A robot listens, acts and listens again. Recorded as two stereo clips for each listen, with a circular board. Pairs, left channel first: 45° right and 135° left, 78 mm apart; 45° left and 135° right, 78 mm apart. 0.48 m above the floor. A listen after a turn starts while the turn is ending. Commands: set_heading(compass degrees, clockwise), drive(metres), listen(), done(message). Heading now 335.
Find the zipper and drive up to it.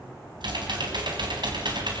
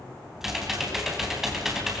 listen()
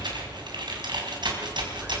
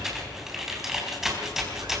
listen()
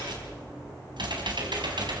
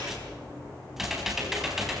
done("I can't make out a zipper to turn to.")